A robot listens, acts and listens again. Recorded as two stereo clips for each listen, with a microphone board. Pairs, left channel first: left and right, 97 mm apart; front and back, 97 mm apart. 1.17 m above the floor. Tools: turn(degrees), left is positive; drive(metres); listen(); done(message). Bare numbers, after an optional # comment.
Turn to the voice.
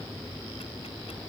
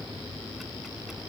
listen()
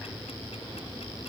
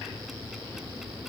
listen()
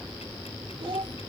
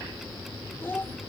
# The child speaking: 65° right.
turn(-65)
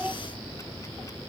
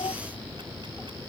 # The child speaking is now 10° right.
turn(-10)
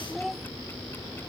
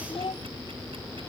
done("Facing the child speaking.")